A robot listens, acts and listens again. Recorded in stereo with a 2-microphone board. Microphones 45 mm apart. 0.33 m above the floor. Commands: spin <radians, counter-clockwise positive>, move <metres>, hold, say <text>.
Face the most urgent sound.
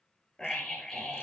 spin 0.52
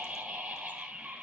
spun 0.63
spin -0.35
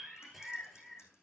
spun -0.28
say Facing the scream.